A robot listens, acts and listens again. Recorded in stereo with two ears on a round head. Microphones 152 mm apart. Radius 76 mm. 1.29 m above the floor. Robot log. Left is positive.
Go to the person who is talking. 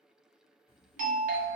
note: The child speaking: about 55° left or 125° left.
cmd yaw +55
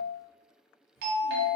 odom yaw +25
note: So it is at 100° left.
cmd yaw +100
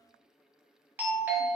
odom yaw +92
note: Nothing new. It was at 10° left.
cmd yaw +10
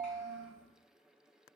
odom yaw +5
cmd idle
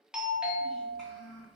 cmd fwd 1.0
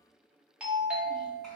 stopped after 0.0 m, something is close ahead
cmd idle
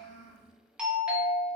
end: Blocked. The child speaking is further on, straight ahead.